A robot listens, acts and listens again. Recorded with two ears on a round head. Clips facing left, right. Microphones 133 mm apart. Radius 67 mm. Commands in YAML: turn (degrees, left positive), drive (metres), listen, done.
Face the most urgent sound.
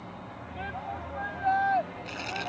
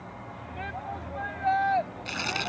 turn: -30
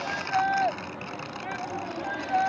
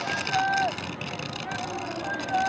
turn: 25
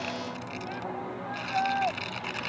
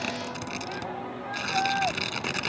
done: "Facing the shout."